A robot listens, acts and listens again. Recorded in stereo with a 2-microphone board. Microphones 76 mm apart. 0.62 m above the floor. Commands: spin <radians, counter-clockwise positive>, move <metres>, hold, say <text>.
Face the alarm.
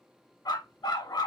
hold
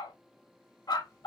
hold
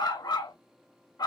say I can't make out an alarm, only a dog barking.